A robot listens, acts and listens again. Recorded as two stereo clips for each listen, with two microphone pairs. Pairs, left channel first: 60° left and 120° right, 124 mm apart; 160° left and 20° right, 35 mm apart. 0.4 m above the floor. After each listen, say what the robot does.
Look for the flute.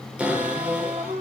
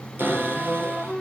Turn 105° right.
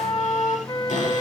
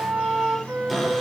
Facing the flute.